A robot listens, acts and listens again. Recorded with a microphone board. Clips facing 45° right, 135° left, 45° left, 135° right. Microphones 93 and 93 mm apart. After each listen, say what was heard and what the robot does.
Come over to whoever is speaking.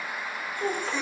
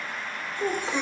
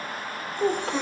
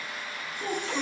The child speaking: 45° left. Turn 45° left.
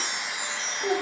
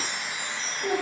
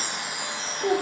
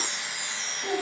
The child speaking is now 15° left. Turn 15° left.
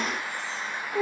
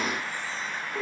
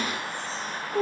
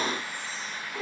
Drive 1.0 m forward.
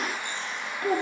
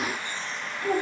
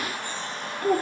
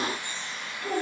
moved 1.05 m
Drive 1.0 m forward.
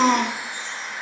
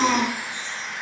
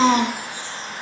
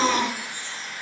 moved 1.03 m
Drive 1.0 m forward.
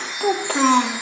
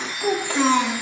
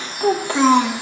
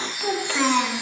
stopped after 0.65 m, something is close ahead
The child speaking is now 15° right. Turn 15° right.
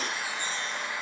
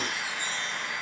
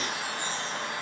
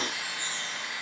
Keep listening.
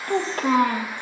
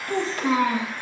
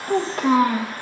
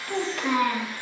I am next to the child speaking.